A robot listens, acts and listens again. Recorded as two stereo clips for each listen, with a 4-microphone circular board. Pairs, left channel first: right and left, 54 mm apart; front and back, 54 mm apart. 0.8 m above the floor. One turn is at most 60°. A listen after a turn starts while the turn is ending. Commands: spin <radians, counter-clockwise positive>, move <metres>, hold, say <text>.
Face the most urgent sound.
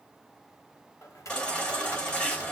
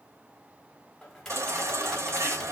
spin -1.05
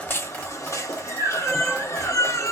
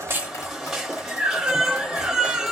spin -1.05
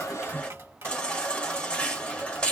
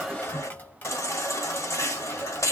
spin -0.26
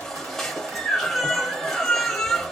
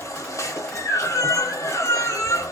say Found it: a baby crying, straight ahead, 1 to 2 m away.